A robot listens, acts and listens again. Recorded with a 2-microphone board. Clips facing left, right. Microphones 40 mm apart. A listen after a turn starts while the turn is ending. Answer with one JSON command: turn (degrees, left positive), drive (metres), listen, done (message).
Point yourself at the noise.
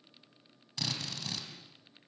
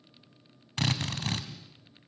{"turn": -50}
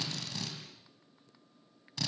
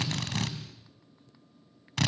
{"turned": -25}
{"turn": -90}
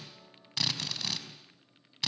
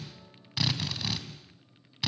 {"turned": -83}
{"turn": -10}
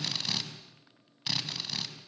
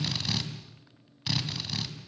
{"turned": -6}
{"done": "Found it: a drill, straight ahead, 2 to 4 m away."}